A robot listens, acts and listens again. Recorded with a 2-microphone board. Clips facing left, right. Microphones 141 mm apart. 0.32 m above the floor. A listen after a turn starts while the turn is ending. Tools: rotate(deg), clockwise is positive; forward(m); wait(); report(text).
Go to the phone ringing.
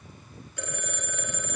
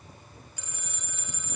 rotate(-60)
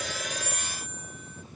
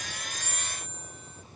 rotate(-60)
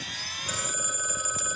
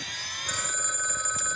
rotate(-10)
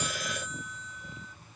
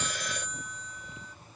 forward(1.0)
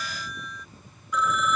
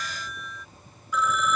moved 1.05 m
forward(1.0)
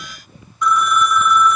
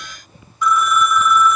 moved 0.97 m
forward(1.0)
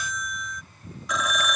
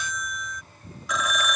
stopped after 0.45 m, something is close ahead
report("I am next to the phone ringing.")